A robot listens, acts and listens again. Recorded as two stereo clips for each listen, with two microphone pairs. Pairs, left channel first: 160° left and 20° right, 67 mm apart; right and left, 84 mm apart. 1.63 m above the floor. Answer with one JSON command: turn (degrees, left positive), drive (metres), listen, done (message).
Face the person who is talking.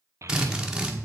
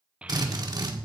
{"turn": 15}
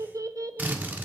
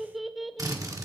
{"done": "Found it: a child speaking, straight ahead, under 1 m away."}